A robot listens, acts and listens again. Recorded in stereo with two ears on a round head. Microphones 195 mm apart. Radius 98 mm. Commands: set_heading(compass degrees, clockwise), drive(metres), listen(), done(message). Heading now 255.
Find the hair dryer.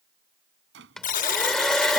set_heading(225)
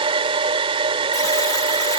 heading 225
set_heading(255)
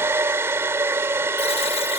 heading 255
set_heading(270)
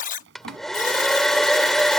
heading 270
done("Found it: a hair dryer, straight ahead.")